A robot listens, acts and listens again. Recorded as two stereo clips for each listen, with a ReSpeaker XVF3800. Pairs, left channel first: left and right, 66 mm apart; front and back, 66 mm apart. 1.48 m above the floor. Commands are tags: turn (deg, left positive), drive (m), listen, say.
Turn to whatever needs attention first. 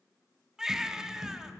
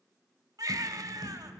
<turn deg="-170"/>
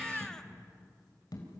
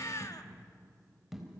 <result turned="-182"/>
<turn deg="10"/>
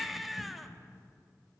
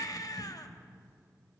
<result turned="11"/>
<say>Facing the baby crying, 1 to 2 m away.</say>